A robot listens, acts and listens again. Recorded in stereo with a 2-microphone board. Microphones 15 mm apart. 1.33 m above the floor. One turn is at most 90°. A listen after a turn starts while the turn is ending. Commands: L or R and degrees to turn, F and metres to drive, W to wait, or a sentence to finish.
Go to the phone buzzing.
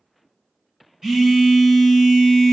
R45
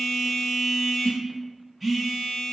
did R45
R10
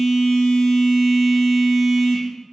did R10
F1.0
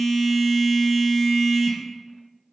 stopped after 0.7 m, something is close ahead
R10
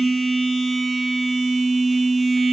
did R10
I am next to the phone buzzing.